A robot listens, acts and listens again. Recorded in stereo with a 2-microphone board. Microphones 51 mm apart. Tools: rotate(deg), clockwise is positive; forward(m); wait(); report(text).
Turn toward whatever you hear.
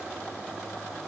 wait()
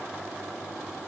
wait()
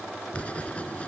rotate(-25)
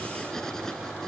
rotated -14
rotate(-10)
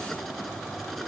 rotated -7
report("Found it: writing, straight ahead.")